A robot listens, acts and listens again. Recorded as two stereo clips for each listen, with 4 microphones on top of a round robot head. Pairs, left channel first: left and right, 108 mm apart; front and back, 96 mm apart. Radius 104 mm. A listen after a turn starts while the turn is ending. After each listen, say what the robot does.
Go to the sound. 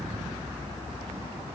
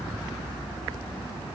Keep listening.
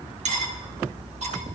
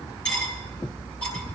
Turn 75° right.
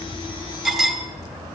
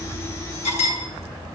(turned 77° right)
Drive 1.0 m forward.
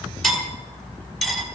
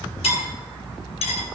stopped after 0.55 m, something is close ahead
Blocked. The cutlery clinking is further on, straight ahead.